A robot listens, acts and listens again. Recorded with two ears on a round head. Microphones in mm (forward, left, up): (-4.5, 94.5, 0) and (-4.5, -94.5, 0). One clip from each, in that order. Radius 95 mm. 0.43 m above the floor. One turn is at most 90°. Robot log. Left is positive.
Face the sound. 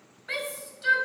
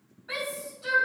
note: The shout: about 60° left or 120° left.
cmd yaw +60
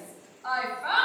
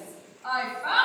note: So it is at 15° left.
cmd yaw +15
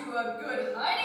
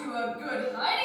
end: Found it: a shout, straight ahead, 2 to 4 m away.